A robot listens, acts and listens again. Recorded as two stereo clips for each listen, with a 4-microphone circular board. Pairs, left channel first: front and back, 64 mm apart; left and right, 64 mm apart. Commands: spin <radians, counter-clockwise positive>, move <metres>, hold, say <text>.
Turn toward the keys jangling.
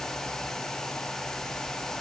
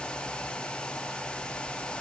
hold
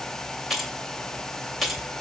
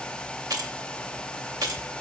spin -1.57
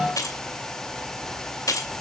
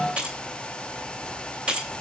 spin -0.26
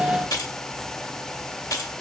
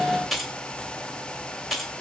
say Found it: keys jangling, straight ahead.